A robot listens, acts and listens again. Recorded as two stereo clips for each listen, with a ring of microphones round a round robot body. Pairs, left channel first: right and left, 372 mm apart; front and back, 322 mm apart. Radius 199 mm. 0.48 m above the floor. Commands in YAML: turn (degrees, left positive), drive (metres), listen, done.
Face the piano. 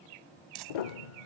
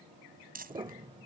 turn: -100
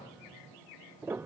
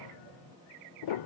done: "Found it: a piano, straight ahead."